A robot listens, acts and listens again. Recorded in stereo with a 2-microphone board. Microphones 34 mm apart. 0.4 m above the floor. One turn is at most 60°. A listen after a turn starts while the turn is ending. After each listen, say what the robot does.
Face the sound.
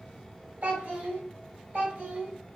Turn 45° right.
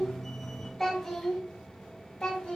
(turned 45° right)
Turn 30° left.
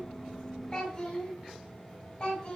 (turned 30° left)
Turn 25° left.
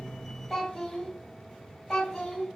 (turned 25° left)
Found it: a child speaking, straight ahead, 1 to 2 m away.